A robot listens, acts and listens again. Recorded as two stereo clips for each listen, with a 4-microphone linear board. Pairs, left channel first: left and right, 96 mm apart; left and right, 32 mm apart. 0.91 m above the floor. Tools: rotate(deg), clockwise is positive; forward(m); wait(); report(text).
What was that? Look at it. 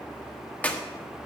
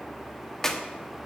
rotate(-15)
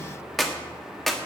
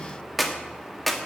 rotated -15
report("Facing the clap.")